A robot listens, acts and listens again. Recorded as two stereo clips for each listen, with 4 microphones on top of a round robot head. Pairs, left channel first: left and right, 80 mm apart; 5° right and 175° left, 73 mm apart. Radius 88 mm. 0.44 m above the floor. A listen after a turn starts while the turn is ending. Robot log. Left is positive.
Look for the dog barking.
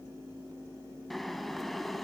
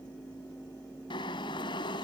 cmd idle
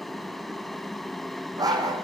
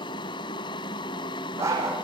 note: The dog barking: 125° right.
cmd yaw -125
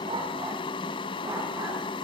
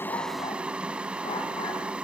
cmd idle
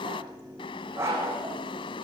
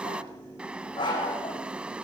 note: The dog barking is now 25° right.
cmd yaw -25
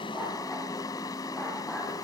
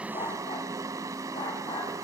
end: Facing the dog barking, over 4 m away.